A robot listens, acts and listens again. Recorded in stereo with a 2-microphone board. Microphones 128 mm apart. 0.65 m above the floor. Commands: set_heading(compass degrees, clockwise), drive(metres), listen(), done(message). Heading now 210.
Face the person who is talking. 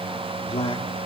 set_heading(170)
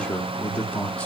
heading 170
set_heading(160)
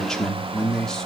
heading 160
done("Found it: a man speaking, straight ahead, 1 to 2 m away.")